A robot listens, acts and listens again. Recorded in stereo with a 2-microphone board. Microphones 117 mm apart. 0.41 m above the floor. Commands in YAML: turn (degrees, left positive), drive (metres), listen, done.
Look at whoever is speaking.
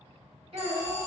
turn: -45
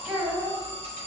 turn: -10
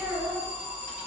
done: "Found it: a child speaking, straight ahead, 1 to 2 m away."